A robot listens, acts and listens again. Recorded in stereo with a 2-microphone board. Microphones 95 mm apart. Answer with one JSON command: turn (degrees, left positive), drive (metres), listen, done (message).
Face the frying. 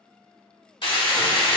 {"turn": 65}
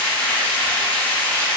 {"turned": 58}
{"turn": 15}
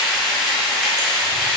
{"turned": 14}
{"done": "Facing the frying."}